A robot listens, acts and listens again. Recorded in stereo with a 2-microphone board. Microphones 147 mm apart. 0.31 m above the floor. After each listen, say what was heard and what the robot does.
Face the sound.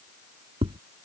The tapping: about 40° right or 140° right. Turn 40° right.
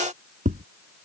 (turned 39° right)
So it is at 100° right. Turn 100° right.
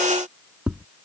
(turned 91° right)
The tapping is now 10° right. Turn 10° right.
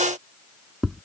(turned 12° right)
Facing the tapping.